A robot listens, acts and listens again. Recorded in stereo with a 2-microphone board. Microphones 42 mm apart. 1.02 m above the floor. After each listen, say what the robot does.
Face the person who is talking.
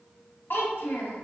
Turn 60° left.
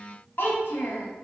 Turn 60° left.
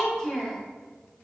Turn 10° left.
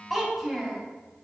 Found it: a child speaking, straight ahead, under 1 m away.